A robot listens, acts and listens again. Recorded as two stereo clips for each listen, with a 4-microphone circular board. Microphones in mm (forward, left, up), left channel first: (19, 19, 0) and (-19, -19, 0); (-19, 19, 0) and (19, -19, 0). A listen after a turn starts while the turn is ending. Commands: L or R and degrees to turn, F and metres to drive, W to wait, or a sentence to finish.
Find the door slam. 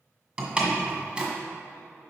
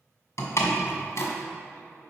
L155
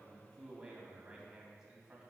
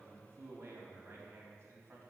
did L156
I heard a door slam from this way, but can't make it out now.